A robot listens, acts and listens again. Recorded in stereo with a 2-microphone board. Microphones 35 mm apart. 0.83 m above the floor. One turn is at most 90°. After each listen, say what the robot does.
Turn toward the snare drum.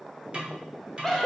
Turn 35° right.
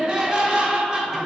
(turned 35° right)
Keep listening.
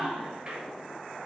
Keep listening.
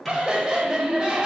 I heard a snare drum, but can't make it out now. It was about straight ahead or 110° right.